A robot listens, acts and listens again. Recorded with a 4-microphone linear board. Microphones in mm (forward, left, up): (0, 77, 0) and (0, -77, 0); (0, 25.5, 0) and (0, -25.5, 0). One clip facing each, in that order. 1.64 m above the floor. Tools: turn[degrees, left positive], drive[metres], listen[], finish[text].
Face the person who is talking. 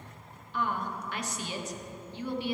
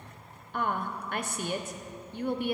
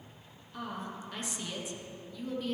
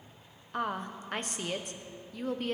Thought: The woman speaking: about 50° right or 130° right.
Action: turn[-50]
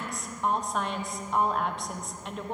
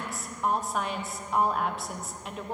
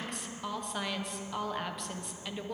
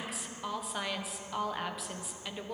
Action: finish[Facing the woman speaking, 1 to 2 m away.]